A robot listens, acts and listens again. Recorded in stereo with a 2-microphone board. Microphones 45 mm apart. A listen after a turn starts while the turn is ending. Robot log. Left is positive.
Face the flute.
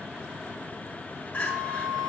note: The flute: about 40° right or 140° right.
cmd yaw -40
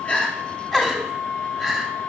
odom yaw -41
note: So it is at 10° right.
cmd yaw -10
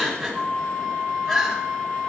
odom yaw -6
end: Found it: a flute, straight ahead.